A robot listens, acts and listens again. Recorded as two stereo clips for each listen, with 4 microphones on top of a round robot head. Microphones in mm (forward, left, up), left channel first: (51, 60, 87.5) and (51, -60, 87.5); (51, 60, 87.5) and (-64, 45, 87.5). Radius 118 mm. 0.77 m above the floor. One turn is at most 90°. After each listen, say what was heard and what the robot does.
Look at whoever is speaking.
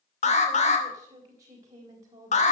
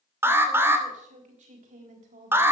The woman speaking: 155° right. Turn 90° right.
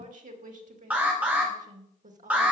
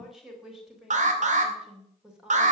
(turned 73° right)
The woman speaking is now 90° right. Turn 90° right.
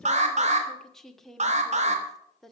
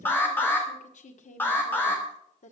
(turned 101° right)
Found it: a woman speaking, straight ahead.